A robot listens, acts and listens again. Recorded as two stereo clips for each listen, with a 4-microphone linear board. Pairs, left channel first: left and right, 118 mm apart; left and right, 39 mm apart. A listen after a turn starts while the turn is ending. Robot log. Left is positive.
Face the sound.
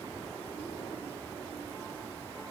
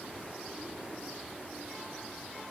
cmd idle
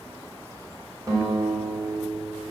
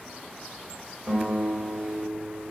note: The guitar: about 30° right or 150° right.
cmd yaw -30
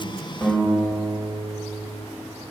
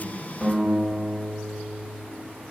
end: Facing the guitar.